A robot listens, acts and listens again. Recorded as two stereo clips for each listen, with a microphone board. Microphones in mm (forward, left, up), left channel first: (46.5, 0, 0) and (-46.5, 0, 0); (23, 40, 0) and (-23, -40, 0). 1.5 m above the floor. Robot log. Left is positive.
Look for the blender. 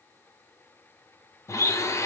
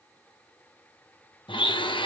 note: The blender: 55° left.
cmd yaw +55
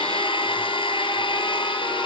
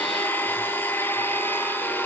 end: Facing the blender, under 1 m away.